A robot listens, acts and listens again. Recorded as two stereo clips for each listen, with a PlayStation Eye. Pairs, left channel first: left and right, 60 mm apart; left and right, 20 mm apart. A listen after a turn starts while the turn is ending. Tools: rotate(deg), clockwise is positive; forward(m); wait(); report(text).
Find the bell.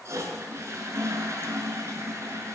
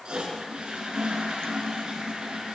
wait()
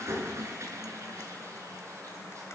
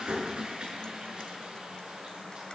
wait()
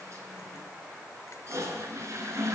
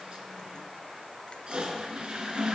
report("I can't make out a bell, only a toilet flushing.")